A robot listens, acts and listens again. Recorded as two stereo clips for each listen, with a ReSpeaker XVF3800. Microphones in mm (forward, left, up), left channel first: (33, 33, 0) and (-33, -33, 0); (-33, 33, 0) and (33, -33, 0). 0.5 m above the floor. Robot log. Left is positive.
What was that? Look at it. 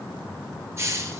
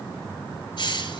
note: The hiss: 165° left.
cmd yaw +165
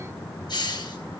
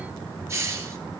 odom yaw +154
note: The hiss is now 10° left.
cmd yaw +10
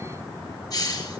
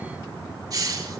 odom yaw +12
end: Found it: a hiss, straight ahead.